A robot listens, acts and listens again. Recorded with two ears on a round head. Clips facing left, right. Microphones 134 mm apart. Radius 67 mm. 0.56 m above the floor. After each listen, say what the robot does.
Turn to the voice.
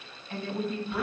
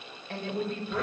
Turn 50° right.
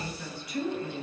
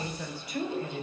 Turn 80° right.
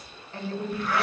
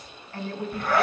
Turn 15° left.
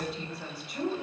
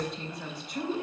Found it: a woman speaking, straight ahead, 2 to 4 m away.